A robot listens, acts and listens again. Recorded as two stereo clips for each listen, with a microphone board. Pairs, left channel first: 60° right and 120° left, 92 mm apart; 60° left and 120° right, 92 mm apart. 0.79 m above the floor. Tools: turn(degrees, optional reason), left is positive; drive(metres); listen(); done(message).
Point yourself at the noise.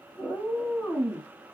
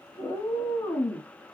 turn(degrees=20, reason="The cat meowing: 20° left.")
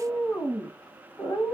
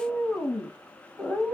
turn(degrees=-25, reason="The cat meowing is now 25° right.")
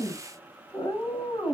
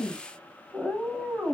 turn(degrees=-40, reason="The cat meowing is now 40° right.")
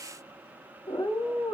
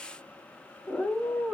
turn(degrees=-30, reason="The cat meowing is now 30° right.")
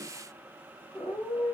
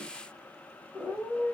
turn(degrees=-15, reason="The cat meowing is now 15° right.")
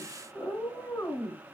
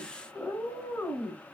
done("Facing the cat meowing.")